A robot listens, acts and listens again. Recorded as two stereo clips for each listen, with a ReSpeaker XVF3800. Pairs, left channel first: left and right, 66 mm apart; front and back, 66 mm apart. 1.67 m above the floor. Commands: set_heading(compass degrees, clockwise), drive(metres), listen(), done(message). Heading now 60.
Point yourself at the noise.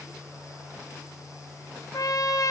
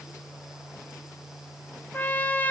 set_heading(0)
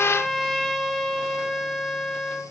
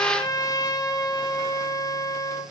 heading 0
done("Found it: a trumpet, straight ahead, 1 to 2 m away.")